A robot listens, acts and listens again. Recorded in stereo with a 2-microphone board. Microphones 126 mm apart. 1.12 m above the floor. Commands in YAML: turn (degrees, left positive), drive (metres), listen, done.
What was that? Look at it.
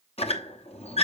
turn: 55
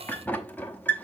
turn: 15
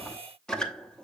done: "Found it: a squeak, straight ahead, under 1 m away."